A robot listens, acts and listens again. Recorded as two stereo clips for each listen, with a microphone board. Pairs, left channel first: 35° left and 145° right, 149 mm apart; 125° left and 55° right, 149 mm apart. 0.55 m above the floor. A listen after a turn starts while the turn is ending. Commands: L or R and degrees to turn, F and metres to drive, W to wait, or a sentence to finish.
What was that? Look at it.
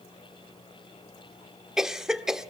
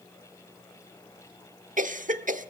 R60
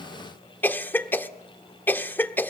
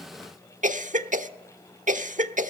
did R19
R40
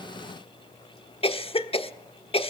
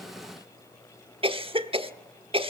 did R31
R10
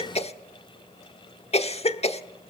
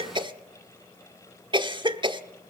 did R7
Facing the cough, 1 to 2 m away.